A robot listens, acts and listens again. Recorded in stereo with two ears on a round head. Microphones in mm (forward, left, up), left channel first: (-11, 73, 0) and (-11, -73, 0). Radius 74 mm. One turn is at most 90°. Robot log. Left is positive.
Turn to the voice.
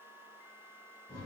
cmd idle
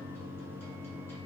cmd idle
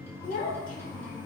note: The child speaking: about 50° left or 130° left.
cmd yaw +50
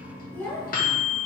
note: So it is at 15° left.
cmd yaw +15
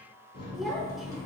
cmd idle
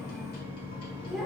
cmd idle
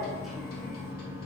end: I heard a child speaking from this way, but can't make it out now.